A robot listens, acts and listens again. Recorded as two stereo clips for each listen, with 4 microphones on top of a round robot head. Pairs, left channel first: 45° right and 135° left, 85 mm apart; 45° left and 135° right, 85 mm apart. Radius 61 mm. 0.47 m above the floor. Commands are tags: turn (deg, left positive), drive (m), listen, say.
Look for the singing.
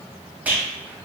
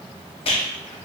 <listen/>
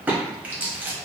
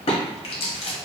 <listen/>
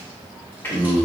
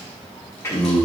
<turn deg="10"/>
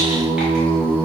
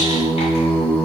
<say>Facing the singing.</say>